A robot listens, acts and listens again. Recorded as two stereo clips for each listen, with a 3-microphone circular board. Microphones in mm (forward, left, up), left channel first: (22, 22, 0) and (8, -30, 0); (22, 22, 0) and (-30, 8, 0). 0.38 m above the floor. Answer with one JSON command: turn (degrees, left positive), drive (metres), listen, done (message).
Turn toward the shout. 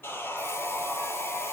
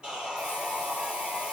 {"listen": true}
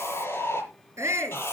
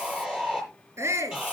{"turn": -130}
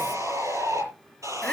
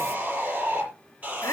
{"listen": true}
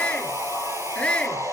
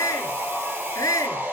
{"done": "Facing the shout."}